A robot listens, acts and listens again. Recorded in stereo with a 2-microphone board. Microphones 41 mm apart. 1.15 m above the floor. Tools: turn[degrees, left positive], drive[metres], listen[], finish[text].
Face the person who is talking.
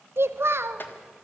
Thought: The child speaking: about 75° right or 105° right.
Action: turn[-75]
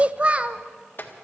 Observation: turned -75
Thought: So it is at 30° right.
Action: turn[-30]
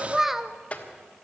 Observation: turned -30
Thought: The child speaking is now 10° right.
Action: turn[-10]
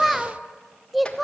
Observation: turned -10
Action: finish[Facing the child speaking, under 1 m away.]